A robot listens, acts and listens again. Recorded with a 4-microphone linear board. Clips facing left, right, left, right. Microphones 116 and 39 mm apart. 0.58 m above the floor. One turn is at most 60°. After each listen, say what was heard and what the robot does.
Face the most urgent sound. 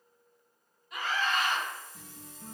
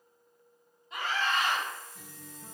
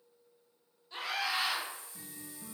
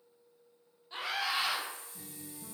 The scream: about 25° right or 155° right. Turn 25° right.
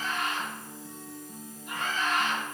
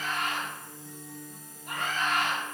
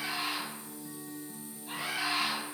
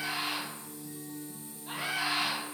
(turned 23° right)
So it is at 130° right. Turn 60° right.
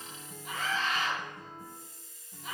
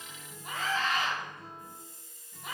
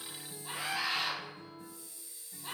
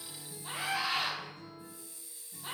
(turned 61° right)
The scream is now 70° right. Turn 60° right.
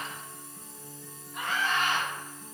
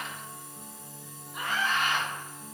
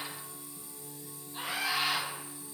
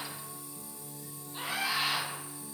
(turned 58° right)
The scream is now 10° right. Turn 10° right.
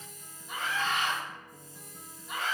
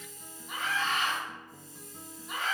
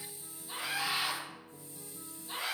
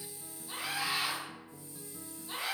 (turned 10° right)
Facing the scream.